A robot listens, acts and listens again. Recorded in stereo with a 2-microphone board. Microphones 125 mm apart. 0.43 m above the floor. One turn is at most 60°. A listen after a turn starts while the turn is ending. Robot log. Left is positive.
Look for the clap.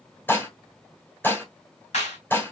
note: The clap: about 65° left or 115° left.
cmd yaw +60
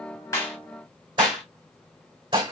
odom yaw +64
cmd idle
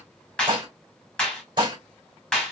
note: So it is at 10° left.
cmd yaw +10
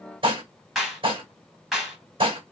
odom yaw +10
end: Facing the clap.